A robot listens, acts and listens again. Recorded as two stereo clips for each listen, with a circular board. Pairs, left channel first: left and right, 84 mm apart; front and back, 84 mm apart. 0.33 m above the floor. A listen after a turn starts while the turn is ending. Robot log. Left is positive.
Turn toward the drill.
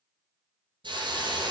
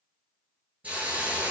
cmd idle
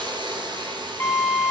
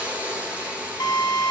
note: The drill: 35° left.
cmd yaw +35
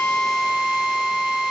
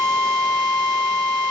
note: The drill is now 10° right.
cmd yaw -10
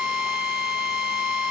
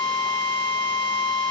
end: Facing the drill, 1 to 2 m away.